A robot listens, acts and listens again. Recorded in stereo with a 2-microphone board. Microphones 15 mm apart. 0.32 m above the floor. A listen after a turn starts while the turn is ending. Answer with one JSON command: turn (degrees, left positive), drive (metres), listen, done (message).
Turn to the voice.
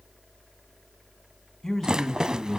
{"turn": 35}
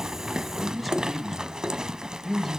{"done": "Found it: a man speaking, straight ahead."}